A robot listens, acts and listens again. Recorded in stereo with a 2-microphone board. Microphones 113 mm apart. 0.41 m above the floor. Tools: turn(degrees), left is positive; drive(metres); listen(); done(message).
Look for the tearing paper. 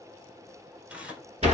turn(degrees=-30)
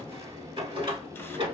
listen()
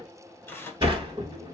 turn(degrees=20)
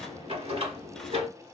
listen()
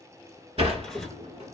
listen()
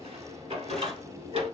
done("I heard tearing paper from this way, but can't make it out now.")